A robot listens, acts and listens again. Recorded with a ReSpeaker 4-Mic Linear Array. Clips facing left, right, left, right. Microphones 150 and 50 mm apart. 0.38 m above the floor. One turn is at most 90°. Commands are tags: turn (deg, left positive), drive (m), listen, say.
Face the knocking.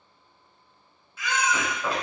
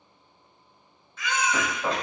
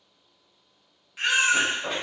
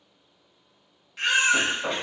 <turn deg="-20"/>
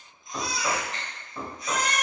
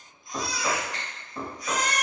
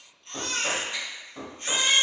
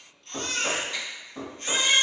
<say>Found it: knocking, straight ahead.</say>